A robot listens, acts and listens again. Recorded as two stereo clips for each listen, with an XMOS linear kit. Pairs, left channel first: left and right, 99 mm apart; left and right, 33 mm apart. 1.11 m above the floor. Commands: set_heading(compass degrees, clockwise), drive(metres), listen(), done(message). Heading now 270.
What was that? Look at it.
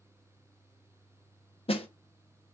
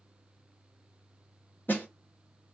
set_heading(195)
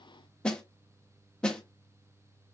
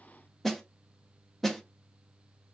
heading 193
set_heading(183)
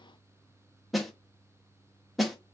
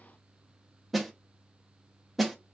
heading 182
done("Found it: a snare drum, straight ahead, under 1 m away.")